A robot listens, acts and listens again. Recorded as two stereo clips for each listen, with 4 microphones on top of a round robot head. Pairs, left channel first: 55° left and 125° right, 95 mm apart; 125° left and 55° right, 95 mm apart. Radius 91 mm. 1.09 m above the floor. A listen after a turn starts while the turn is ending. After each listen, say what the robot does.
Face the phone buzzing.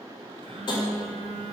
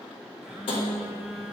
Turn 135° right.
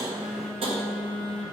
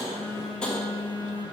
Turn 30° right.
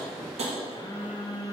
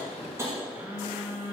Turn 10° left.
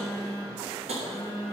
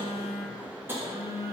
Found it: a phone buzzing, straight ahead.